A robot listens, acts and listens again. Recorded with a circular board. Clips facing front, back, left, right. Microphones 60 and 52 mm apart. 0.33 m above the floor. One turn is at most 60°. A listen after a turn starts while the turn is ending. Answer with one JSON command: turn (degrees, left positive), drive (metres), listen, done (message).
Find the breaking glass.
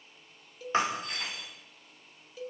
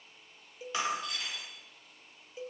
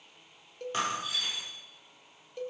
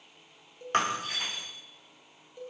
{"turn": -50}
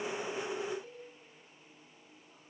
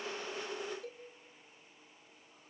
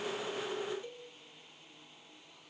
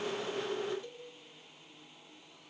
{"done": "Facing where the breaking glass came from. I can't hear it now."}